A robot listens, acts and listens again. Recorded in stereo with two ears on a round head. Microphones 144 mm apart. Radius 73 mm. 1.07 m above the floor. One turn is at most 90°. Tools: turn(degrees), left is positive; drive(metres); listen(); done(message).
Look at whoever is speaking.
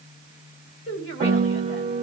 turn(degrees=90)
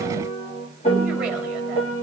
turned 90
listen()
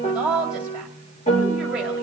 done("Found it: a woman speaking, straight ahead, 2 to 4 m away.")